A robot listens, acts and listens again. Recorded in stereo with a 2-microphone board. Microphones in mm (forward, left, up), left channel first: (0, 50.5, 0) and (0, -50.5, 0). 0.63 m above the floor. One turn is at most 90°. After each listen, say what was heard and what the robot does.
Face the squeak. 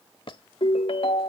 The squeak: about 55° left or 125° left. Turn 55° left.
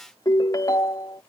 Keep listening.
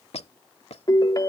So it is at 75° left. Turn 75° left.
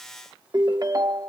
Keep listening.
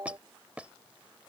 The squeak is now 10° right. Turn 10° right.
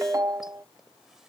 Keep listening.
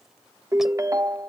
Keep listening.
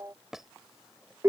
Found it: a squeak, straight ahead.